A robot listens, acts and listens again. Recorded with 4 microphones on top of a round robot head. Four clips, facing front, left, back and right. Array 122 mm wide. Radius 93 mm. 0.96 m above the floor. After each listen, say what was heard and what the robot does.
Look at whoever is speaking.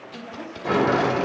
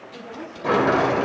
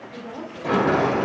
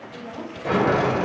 The woman speaking: 165° right. Turn 165° right.
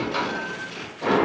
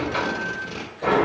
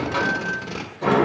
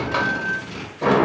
Keep listening.
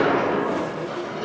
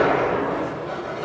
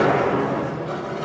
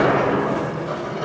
Keep listening.
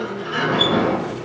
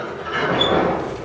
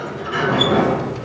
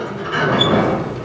I heard a woman speaking from this way, but can't make it out now.